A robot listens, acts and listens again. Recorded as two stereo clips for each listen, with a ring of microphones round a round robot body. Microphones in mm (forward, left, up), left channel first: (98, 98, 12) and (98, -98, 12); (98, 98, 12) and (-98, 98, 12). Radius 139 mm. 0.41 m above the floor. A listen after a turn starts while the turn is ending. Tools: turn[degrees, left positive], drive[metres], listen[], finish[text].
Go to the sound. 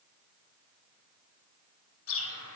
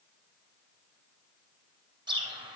Thought: The bird: 110° left.
Action: turn[110]
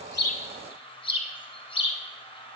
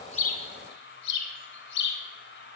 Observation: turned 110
Thought: The bird is now 25° left.
Action: turn[25]
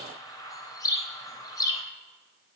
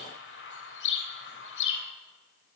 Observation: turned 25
Thought: The bird is now 15° left.
Action: turn[15]
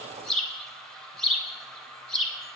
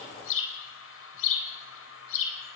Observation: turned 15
Action: drive[1.0]
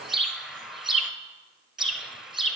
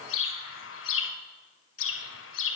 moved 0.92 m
Action: drive[1.0]
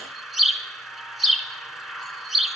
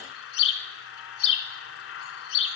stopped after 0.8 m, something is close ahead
Action: finish[I am next to the bird.]